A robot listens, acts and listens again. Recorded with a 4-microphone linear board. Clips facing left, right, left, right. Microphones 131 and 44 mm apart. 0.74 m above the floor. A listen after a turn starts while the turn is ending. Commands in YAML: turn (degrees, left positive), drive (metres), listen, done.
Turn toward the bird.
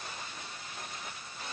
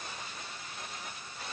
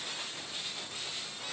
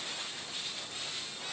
listen: true
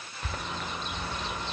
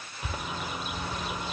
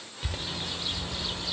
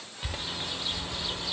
turn: -30
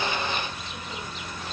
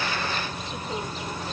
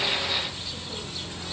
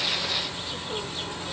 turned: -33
turn: -140
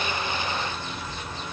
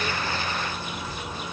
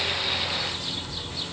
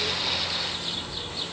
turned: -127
turn: -10
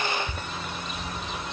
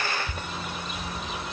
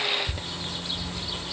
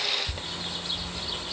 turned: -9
done: "Facing the bird."